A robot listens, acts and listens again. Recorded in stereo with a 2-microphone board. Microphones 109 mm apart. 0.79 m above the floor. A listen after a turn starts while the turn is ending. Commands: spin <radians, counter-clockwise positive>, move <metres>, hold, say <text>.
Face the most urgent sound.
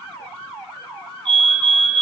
spin -0.87
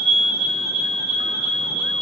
spin -1.40
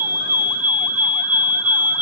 spin -0.26
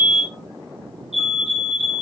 say Facing the fire alarm, over 4 m away.